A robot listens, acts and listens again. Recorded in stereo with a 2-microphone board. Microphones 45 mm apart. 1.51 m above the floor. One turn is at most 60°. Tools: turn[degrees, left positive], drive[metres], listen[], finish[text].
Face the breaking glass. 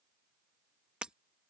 Thought: The breaking glass: about 20° right or 160° right.
Action: turn[-20]
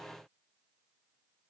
Action: listen[]
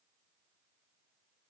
Action: finish[I heard breaking glass, but can't make it out now. It was about straight ahead or 140° right.]